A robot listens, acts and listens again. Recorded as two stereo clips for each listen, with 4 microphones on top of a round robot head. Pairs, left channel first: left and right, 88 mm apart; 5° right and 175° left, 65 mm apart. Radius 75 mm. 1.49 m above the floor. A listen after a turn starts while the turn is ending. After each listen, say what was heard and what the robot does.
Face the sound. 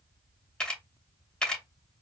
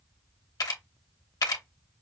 The camera shutter: 10° left. Turn 10° left.
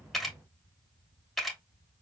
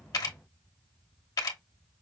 Found it: a camera shutter, straight ahead, under 1 m away.